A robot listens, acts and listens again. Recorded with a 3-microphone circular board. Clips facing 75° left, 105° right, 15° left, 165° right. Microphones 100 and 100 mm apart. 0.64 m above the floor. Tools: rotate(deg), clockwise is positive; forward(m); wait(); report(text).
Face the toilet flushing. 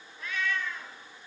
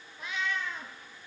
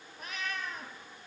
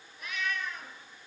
wait()
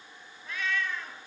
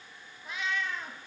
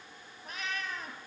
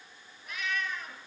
wait()
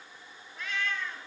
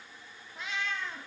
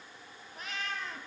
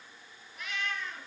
report("I can't make out a toilet flushing, only a cat meowing.")